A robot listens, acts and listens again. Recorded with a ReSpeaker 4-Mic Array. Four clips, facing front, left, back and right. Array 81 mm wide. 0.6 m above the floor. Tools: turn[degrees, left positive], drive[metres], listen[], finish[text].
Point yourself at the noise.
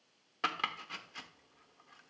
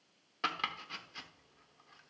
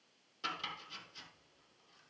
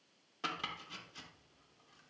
Thought: The chopping: 30° left.
Action: turn[30]
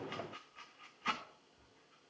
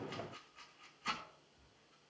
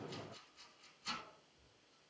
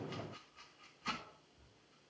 Action: finish[Facing the chopping, under 1 m away.]